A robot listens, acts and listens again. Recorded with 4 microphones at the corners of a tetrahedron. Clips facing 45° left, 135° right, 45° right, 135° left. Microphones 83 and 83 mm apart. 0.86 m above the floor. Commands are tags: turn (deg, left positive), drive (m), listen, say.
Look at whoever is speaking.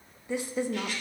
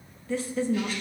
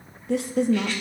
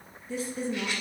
<turn deg="-30"/>
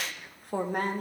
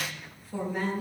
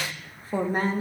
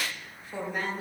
<turn deg="10"/>
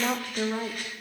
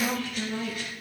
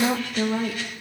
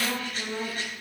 <say>Found it: a woman speaking, straight ahead, under 1 m away.</say>